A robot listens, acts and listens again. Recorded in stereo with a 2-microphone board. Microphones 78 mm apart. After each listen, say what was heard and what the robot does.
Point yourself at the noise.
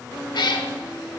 The cat meowing: about 70° left or 110° left. Turn 70° left.
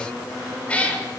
So it is at 20° left. Turn 20° left.
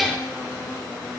Facing the cat meowing.